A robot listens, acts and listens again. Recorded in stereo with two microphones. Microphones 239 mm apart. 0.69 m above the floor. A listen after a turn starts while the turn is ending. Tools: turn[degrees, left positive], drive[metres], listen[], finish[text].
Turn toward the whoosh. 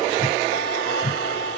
Thought: The whoosh: about 35° left or 145° left.
Action: turn[35]
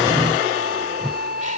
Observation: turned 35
Action: finish[Found it: a whoosh, straight ahead.]